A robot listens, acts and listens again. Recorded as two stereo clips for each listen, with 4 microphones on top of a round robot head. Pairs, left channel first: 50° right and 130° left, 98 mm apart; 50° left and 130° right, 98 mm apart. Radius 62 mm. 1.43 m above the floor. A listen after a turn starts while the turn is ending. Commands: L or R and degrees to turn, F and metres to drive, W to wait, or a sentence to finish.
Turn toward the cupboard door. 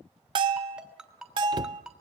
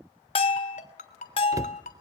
L175
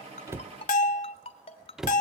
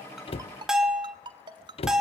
L45
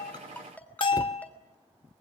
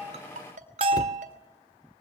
W
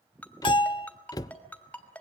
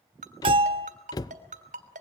Found it: a cupboard door, straight ahead.